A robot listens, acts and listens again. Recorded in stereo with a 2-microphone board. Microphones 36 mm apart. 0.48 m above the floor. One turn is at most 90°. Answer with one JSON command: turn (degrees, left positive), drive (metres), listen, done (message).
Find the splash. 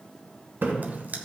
{"turn": -70}
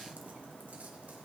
{"listen": true}
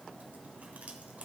{"done": "I heard a splash, but can't make it out now. It was about straight ahead or 40° right."}